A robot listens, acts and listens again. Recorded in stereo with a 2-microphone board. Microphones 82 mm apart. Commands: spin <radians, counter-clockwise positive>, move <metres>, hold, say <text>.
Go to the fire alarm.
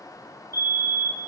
spin -0.70
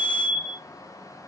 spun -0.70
move 1.0
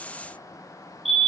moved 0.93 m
move 1.0
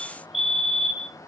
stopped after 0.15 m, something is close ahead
say I am next to the fire alarm.